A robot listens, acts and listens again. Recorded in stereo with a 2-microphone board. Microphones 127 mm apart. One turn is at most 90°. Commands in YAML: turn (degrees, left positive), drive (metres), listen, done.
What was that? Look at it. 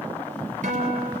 turn: -70
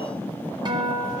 turn: -40
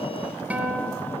turn: -10
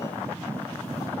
listen: true
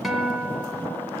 done: "Facing the guitar."